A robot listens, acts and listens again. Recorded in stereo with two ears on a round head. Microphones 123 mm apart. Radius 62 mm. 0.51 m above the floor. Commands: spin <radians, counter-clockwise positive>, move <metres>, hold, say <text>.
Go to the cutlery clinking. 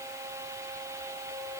hold
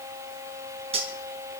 spin -0.87
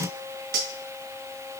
spin -1.40
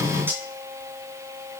spin -0.26
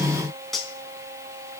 move 1.0
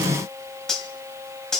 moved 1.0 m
move 1.0
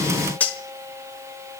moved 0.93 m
spin 0.26
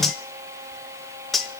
move 1.0
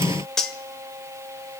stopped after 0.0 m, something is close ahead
say Arrived at the cutlery clinking, straight ahead.